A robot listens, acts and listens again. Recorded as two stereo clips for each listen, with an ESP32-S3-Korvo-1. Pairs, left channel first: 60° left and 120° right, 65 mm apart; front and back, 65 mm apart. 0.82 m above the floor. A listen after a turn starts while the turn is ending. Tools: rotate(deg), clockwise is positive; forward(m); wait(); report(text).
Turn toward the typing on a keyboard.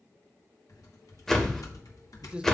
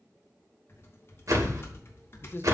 rotate(-50)
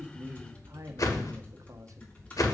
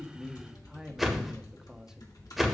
report("Found it: typing on a keyboard, straight ahead, 2 to 4 m away.")